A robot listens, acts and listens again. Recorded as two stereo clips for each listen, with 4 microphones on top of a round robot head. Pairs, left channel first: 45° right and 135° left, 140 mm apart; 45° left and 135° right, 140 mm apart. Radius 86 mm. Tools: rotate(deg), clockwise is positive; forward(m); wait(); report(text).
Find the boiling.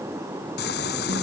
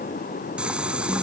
rotate(55)
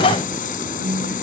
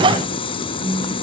rotate(10)
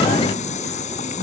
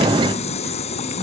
report("Facing the boiling.")